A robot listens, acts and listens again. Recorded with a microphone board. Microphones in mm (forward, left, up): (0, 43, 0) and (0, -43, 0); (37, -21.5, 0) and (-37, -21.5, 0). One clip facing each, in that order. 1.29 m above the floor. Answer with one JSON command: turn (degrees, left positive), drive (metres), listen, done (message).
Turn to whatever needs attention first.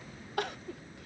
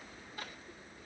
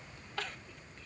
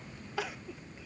{"turn": 100}
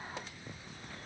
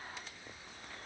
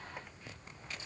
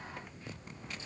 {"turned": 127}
{"turn": -30}
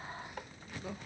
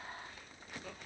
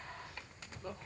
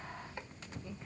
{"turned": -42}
{"turn": 15}
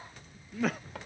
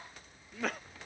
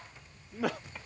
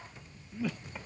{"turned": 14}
{"done": "Found it: crying, straight ahead."}